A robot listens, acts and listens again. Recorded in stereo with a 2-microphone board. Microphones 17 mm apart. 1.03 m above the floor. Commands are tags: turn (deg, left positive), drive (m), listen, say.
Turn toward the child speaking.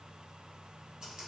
<listen/>
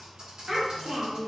<turn deg="-60"/>
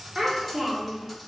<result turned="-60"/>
<turn deg="-30"/>
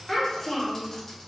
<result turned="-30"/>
<turn deg="15"/>
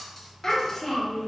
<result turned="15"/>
<turn deg="25"/>
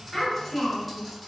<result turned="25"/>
<turn deg="15"/>
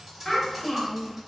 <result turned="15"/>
<say>Facing the child speaking.</say>